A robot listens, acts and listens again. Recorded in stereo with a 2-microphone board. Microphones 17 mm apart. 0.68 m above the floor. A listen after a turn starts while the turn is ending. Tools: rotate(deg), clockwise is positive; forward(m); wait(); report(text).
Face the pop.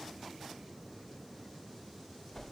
wait()
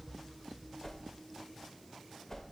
wait()
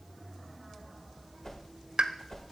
rotate(55)
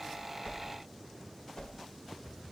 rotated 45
wait()
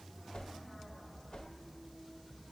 report("I heard a pop, but can't make it out now. It was about 10° right or 80° right.")